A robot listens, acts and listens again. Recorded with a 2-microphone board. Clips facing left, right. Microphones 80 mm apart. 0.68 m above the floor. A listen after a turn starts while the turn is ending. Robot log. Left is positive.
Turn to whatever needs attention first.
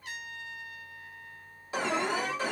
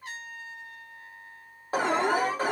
note: The alarm: about 45° right or 135° right.
cmd yaw -45
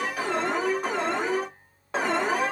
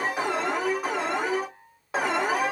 end: Found it: an alarm, straight ahead, under 1 m away.